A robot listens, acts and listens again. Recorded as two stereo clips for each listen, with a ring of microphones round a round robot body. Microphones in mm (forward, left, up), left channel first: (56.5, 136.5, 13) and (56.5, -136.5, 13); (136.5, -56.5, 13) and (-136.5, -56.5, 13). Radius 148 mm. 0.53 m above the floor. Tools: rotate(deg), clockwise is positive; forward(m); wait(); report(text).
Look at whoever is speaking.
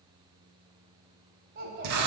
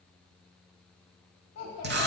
rotate(40)
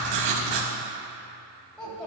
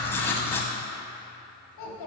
report("Found it: a child speaking, straight ahead.")